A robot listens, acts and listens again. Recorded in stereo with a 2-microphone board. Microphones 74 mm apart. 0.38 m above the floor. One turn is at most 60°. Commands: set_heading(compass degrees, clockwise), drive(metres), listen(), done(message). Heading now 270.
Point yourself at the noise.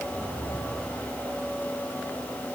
listen()
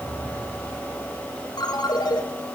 set_heading(210)
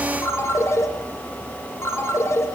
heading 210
set_heading(170)
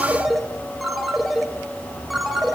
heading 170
done("Found it: a ringtone, straight ahead, 2 to 4 m away.")